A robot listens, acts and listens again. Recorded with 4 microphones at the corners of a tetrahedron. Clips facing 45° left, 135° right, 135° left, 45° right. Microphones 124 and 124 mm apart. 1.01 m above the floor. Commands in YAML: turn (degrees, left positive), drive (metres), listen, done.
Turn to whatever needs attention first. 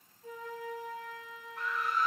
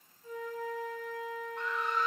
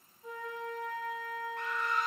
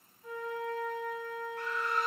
turn: 130
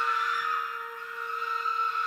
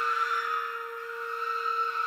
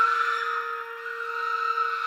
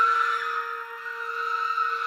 turn: 40
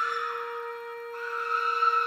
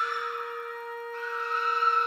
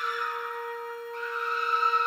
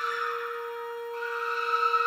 done: "Facing the scream, 1 to 2 m away."